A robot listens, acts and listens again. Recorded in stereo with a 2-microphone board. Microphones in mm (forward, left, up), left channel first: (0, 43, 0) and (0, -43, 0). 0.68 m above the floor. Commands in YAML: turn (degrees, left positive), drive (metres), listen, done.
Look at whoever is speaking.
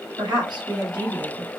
turn: -55
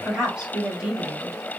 turn: -10
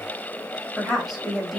done: "Facing the woman speaking, 1 to 2 m away."